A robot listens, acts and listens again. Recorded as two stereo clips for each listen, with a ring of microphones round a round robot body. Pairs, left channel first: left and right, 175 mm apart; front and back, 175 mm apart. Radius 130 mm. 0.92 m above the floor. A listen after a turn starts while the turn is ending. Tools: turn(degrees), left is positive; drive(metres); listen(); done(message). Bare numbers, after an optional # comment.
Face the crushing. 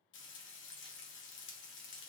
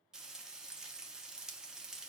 listen()
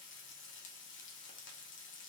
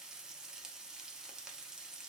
listen()
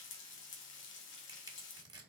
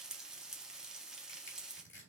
# The crushing: 25° right.
turn(-25)
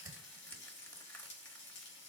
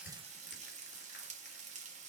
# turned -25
listen()
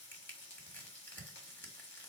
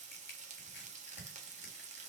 # The crushing is now 10° left.
turn(10)
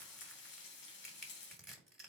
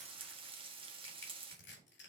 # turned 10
done("Facing the crushing, 1 to 2 m away.")